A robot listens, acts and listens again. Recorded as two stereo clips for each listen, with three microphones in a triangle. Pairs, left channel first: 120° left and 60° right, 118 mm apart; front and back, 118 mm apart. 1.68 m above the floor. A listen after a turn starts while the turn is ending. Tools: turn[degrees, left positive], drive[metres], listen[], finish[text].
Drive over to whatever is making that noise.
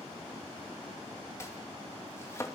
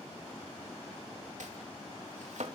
Thought: The chopping: 175° right.
Action: turn[-175]
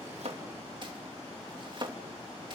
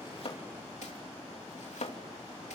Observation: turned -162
Thought: The chopping is now 15° right.
Action: turn[-15]
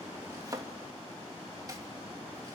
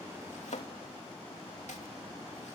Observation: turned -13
Action: drive[1.0]
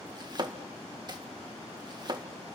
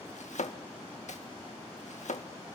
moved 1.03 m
Action: drive[1.0]
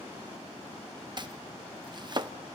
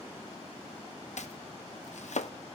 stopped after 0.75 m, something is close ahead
Thought: The chopping is now 10° right.
Action: turn[-10]
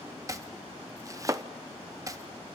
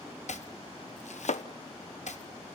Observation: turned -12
Action: finish[Arrived at the chopping, straight ahead.]